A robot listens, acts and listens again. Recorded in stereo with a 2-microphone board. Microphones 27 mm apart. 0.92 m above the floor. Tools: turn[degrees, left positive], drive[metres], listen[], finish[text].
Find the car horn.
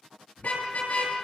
Thought: The car horn: about 60° left or 120° left.
Action: turn[60]
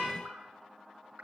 Action: listen[]
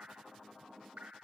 Action: listen[]
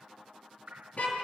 Thought: So it is at 60° left.
Action: turn[60]
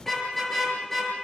Thought: The car horn is now 10° left.
Action: turn[10]
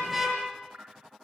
Action: finish[Facing the car horn, over 4 m away.]